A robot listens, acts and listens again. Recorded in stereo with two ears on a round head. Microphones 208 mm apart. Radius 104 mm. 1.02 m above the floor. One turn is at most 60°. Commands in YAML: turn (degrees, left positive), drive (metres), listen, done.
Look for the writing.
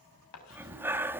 turn: 60
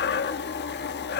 turn: 30
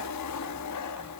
listen: true
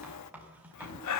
done: "Facing the writing, over 4 m away."